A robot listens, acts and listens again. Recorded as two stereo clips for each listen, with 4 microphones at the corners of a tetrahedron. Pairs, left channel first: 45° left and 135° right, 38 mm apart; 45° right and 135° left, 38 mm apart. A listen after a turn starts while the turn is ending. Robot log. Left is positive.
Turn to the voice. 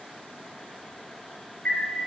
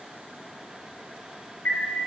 cmd idle
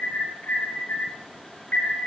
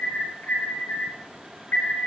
cmd idle
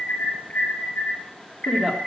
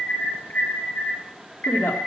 note: The woman speaking: 60° right.
cmd yaw -60
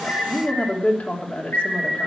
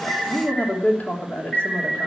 end: Facing the woman speaking.